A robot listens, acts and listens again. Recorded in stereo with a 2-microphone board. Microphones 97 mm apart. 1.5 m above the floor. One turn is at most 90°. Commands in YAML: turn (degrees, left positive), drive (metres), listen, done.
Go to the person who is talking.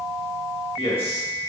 turn: 90
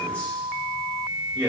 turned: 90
turn: 15
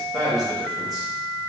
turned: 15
drive: 1.0
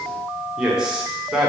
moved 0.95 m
drive: 1.0
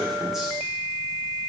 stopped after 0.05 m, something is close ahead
done: "I am next to the man speaking."